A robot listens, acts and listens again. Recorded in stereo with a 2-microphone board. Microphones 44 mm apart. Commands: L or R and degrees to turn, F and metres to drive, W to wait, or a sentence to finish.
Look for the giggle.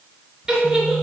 R30
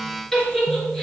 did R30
L15
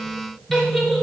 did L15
Facing the giggle.